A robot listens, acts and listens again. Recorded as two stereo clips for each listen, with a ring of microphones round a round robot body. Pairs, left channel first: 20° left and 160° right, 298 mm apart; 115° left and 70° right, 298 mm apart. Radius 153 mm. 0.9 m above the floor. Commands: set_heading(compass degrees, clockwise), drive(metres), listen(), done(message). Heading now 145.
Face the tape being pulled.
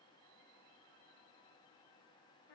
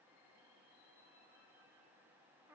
listen()
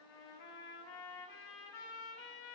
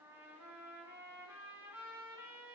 listen()
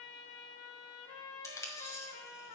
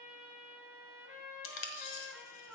set_heading(45)
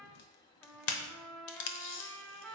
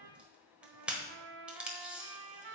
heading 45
set_heading(25)
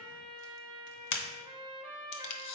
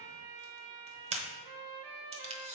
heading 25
done("Facing the tape being pulled.")